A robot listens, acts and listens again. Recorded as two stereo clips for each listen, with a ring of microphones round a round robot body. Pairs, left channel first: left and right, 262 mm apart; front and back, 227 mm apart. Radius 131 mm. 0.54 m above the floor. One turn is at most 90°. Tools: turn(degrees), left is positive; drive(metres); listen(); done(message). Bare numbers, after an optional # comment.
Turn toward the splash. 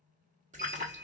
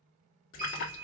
# The splash: 30° right.
turn(-30)
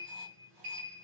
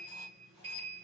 done("I heard a splash from this way, but can't make it out now.")